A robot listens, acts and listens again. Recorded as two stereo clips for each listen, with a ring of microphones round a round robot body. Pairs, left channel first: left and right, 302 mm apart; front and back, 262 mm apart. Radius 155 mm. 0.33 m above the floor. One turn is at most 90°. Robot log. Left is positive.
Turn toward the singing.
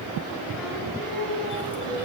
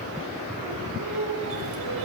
note: The singing: 175° left.
cmd yaw +90
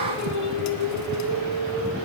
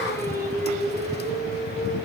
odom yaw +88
note: The singing is now 75° left.
cmd yaw +75
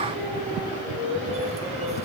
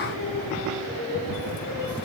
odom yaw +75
end: Facing the singing, over 4 m away.